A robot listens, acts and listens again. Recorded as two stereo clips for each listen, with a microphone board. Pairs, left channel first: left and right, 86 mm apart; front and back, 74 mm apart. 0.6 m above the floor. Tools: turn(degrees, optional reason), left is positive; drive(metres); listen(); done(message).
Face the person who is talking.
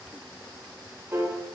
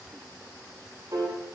listen()
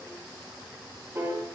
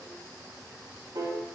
listen()
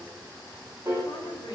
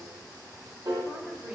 turn(degrees=100, reason="The woman speaking: 100° left.")
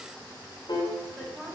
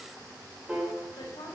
turn(degrees=-10, reason="The woman speaking is now 10° right.")
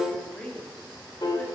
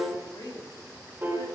done("Found it: a woman speaking, straight ahead, 2 to 4 m away.")